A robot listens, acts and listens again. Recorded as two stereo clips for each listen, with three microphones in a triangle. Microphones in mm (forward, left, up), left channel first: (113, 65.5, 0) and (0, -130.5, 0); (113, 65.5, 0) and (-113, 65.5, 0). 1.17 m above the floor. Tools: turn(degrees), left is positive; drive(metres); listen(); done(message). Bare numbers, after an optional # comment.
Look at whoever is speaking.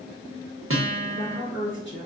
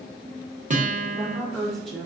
# The woman speaking: 90° left.
turn(90)
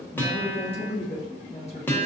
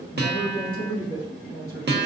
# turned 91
done("Facing the woman speaking.")